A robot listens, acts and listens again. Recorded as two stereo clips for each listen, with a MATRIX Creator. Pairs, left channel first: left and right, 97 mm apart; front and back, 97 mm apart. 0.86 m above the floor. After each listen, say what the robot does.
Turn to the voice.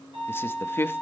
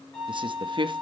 Turn 155° left.
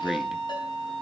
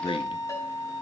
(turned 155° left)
Found it: a man speaking, straight ahead, under 1 m away.